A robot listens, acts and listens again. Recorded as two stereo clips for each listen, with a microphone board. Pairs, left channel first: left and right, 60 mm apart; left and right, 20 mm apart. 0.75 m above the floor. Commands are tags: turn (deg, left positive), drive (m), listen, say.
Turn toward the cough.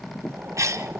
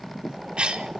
<turn deg="-60"/>
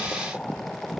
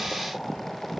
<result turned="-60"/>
<listen/>
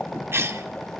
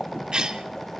<turn deg="-50"/>
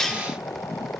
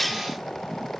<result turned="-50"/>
<turn deg="10"/>
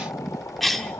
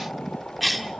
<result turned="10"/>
<say>Facing the cough.</say>